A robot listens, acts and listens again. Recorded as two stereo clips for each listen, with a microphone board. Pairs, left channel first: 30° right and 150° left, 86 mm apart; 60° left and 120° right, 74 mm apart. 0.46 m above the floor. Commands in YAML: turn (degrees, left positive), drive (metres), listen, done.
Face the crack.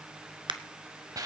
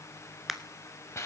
turn: 155
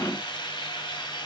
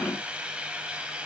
done: "Facing where the crack came from. I can't hear it now."